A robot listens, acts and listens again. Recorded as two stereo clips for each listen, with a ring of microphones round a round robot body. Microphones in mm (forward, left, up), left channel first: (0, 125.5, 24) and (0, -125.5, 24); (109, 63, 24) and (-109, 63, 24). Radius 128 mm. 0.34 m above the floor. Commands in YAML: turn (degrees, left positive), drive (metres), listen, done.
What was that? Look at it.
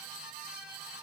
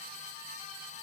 listen: true
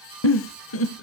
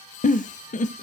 turn: 55
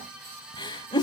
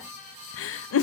turn: 15
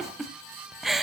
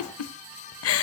done: "Found it: a giggle, straight ahead, under 1 m away."